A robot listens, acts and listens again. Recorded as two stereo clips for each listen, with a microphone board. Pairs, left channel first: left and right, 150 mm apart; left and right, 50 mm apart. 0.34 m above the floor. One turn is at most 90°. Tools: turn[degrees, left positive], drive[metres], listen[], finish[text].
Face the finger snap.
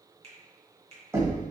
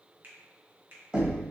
Thought: The finger snap: about 45° right or 135° right.
Action: turn[-45]
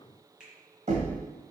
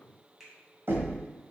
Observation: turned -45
Action: finish[Facing the finger snap, 1 to 2 m away.]